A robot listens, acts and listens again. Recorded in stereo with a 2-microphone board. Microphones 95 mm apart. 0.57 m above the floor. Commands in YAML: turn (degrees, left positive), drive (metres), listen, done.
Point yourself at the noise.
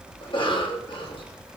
turn: 60
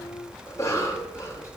turn: 35
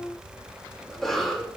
done: "Facing the cough."